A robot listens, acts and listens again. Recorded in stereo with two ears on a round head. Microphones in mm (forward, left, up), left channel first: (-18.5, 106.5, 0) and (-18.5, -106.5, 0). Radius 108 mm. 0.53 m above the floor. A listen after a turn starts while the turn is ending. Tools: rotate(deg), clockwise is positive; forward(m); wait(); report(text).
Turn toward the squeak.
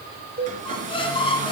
rotate(-25)
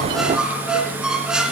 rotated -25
report("Facing the squeak.")